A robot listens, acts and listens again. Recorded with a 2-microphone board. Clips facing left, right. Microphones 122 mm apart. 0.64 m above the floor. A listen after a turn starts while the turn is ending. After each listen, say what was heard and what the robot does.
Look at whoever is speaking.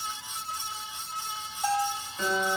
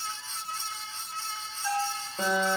Keep listening.
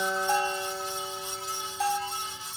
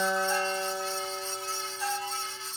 Keep listening.
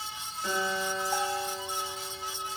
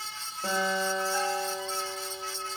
I can't make out anyone speaking to turn to.